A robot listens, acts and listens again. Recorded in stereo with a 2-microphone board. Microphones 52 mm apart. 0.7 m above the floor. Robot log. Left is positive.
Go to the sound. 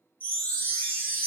note: The chime: about 40° left or 140° left.
cmd yaw +40
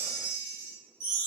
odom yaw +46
note: So it is at 95° left.
cmd yaw +95
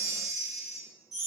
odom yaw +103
note: The chime is now 10° right.
cmd yaw -10
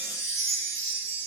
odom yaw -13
cmd fwd 1.0
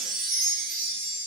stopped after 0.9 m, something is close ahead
end: Arrived at the chime, straight ahead.